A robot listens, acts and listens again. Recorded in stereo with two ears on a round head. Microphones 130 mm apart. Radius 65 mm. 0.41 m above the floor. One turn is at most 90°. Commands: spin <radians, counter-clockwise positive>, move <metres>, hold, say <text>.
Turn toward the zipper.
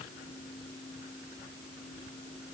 hold
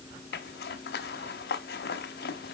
spin 1.31
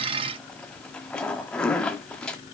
say Found it: a zipper, straight ahead.